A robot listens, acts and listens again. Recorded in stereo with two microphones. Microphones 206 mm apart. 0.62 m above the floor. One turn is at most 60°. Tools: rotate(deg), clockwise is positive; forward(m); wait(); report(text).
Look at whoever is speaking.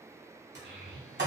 rotate(60)
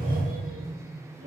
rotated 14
rotate(60)
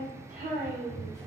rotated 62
rotate(45)
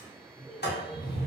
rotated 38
wait()
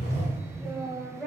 report("Found it: a child speaking, straight ahead, under 1 m away.")